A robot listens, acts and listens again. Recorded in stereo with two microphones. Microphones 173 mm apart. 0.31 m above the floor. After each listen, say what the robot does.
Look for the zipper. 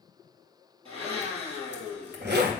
Turn 90° right.
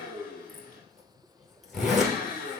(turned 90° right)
Found it: a zipper, straight ahead.